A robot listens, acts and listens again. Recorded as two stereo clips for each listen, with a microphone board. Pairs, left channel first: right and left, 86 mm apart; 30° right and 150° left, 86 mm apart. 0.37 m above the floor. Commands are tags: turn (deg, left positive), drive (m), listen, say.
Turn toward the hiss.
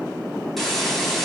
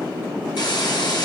<say>Facing the hiss, 1 to 2 m away.</say>